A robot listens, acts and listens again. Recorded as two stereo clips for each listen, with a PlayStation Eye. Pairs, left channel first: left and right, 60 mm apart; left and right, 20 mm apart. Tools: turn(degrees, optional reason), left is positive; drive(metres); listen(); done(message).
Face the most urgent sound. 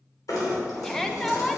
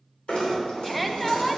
turn(degrees=30)
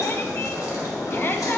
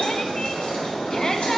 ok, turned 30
listen()
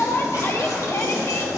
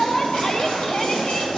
turn(degrees=140, reason="So it is at 140° left.")
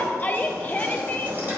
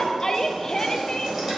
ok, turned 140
turn(degrees=30, reason="The shout is now 30° left.")
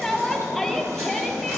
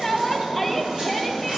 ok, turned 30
done("Facing the shout.")